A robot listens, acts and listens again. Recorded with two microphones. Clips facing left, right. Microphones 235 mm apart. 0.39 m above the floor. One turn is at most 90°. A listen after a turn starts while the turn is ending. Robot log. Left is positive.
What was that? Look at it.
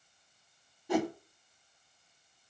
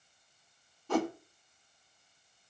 cmd yaw +30
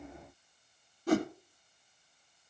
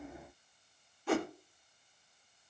note: So it is at 135° left.
cmd yaw +90
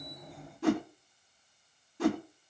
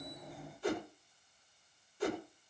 note: The whoosh is now 80° left.
cmd yaw +80
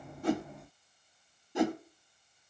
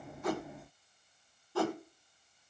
note: The whoosh is now 20° left.
cmd yaw +20
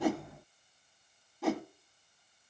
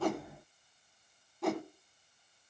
end: Found it: a whoosh, straight ahead.